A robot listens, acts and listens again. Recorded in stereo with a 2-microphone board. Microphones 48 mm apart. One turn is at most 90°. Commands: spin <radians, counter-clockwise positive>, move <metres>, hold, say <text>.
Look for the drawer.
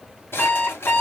spin 0.96
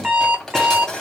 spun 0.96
spin 0.26
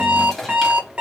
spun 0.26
say Found it: a drawer, straight ahead, 1 to 2 m away.